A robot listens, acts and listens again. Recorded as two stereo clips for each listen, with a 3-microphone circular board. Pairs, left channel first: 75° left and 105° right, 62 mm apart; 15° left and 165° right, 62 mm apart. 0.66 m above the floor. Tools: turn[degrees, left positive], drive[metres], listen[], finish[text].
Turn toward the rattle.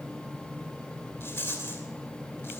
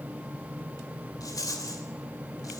Thought: The rattle: 25° left.
Action: turn[25]
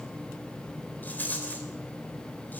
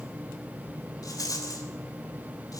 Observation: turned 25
Thought: The rattle is now 15° left.
Action: turn[15]
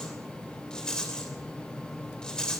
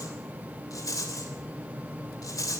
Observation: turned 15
Action: finish[Facing the rattle.]